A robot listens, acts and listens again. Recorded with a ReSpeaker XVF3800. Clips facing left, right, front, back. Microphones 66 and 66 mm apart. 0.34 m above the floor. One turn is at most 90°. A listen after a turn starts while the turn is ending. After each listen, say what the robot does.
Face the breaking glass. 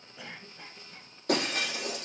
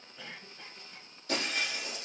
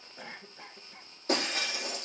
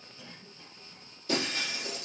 Turn 50° left.
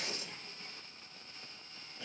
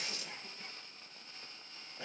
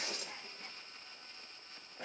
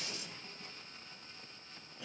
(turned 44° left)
I heard breaking glass from this way, but can't make it out now.